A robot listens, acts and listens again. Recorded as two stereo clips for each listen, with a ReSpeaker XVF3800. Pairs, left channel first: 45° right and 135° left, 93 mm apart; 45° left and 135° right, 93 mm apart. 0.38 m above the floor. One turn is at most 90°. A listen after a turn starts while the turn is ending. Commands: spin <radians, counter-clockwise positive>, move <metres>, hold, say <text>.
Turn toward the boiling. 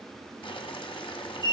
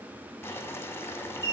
spin -0.35
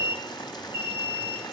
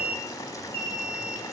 say Found it: boiling, straight ahead.